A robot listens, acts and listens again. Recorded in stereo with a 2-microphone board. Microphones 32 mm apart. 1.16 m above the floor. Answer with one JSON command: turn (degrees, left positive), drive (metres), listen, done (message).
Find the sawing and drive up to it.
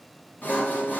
{"turn": 90}
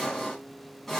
{"turn": 10}
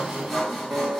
{"drive": 1.0}
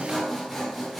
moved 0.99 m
{"drive": 1.0}
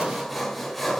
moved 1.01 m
{"drive": 1.0}
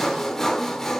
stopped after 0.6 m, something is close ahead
{"turn": 15}
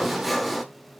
{"done": "Arrived at the sawing, straight ahead."}